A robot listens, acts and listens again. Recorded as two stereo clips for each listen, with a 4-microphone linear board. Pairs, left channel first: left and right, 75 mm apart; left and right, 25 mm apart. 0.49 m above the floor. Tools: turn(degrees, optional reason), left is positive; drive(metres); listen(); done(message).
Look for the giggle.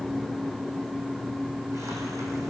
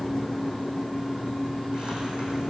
listen()
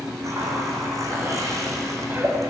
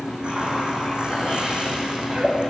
turn(degrees=-25, reason="The giggle: about 25° right or 155° right.")
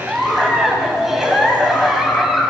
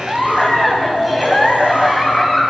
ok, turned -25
done("Facing the giggle, 2 to 4 m away.")